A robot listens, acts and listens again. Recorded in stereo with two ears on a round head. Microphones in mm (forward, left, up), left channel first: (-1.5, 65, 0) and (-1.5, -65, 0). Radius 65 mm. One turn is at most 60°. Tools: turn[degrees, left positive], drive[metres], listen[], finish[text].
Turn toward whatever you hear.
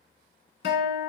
Action: turn[60]
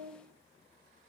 Thought: So it is at 20° left.
Action: turn[20]
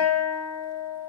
Action: finish[Facing the guitar, 1 to 2 m away.]